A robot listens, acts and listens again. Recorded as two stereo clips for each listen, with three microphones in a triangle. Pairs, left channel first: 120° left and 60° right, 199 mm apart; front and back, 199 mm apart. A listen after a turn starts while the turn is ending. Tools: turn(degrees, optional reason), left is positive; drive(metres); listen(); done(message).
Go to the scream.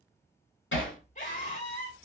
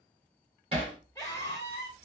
turn(degrees=75, reason="The scream: 75° left.")
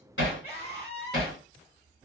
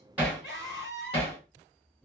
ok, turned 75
turn(degrees=15, reason="The scream is now 15° left.")
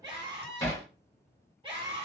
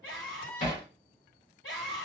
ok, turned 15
drive(metres=1.0)
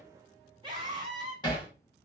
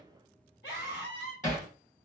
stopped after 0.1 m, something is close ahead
done("Blocked. The scream is further on, straight ahead.")